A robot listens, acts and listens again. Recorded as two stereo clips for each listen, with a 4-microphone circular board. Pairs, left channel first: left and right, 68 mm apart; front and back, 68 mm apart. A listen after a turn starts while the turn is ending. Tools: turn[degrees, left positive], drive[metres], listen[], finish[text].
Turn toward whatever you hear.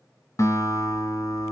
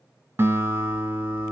Thought: The guitar: 120° left.
Action: turn[120]
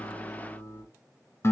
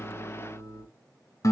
Thought: The guitar is now 35° left.
Action: turn[35]
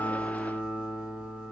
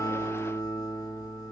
Thought: The guitar is now 20° right.
Action: turn[-20]
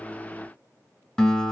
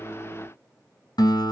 Action: finish[Found it: a guitar, straight ahead, 1 to 2 m away.]